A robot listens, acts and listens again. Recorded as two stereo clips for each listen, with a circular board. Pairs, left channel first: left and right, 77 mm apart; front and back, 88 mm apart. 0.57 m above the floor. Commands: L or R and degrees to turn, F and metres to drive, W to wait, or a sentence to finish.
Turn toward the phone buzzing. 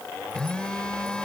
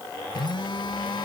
L15
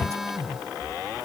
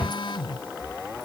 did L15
Found it: a phone buzzing, straight ahead.